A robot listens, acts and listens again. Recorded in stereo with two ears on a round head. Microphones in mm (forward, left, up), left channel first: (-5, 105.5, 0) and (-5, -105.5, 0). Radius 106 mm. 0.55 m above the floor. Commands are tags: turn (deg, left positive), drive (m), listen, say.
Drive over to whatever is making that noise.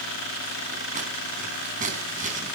<turn deg="-30"/>
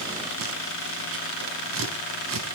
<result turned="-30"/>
<turn deg="-120"/>
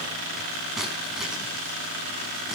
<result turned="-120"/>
<drive m="1.0"/>
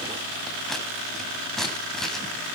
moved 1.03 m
<drive m="1.0"/>
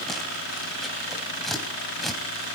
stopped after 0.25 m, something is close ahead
<say>Something is in my way. I am facing the scissors but have not reached it.</say>